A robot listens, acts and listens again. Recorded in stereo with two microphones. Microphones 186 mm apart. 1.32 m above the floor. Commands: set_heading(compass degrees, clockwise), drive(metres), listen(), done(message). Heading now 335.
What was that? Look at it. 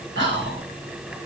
set_heading(65)
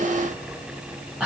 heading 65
done("Found it: whispering, straight ahead.")